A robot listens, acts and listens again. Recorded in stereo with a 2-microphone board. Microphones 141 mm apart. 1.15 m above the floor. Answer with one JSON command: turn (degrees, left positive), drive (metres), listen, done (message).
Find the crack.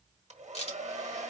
{"turn": 50}
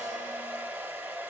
{"listen": true}
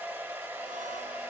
{"done": "I heard a crack, but can't make it out now. It was about straight ahead or 80° left."}